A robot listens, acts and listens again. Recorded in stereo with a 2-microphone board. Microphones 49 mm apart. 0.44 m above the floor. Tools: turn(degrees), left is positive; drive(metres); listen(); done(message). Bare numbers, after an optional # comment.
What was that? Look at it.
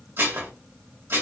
# The dishes clattering: about 45° right or 135° right.
turn(-45)
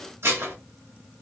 # So it is at 80° right.
turn(-80)
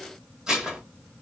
# The dishes clattering is now 15° right.
turn(-15)
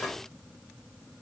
done("Facing the dishes clattering, 1 to 2 m away.")